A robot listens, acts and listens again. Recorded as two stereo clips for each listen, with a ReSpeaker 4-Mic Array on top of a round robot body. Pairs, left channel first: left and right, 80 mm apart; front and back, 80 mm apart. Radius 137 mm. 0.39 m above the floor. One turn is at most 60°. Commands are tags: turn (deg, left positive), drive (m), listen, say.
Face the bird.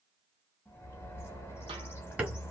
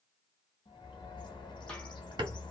<turn deg="25"/>
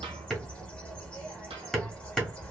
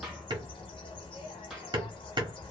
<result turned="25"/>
<turn deg="10"/>
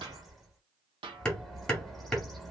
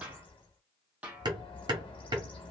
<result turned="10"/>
<say>Facing the bird.</say>